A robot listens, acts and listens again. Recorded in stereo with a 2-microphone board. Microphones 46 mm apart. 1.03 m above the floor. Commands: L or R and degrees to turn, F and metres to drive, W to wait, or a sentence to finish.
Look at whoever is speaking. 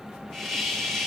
W
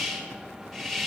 W
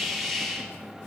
I can't make out anyone speaking to turn to.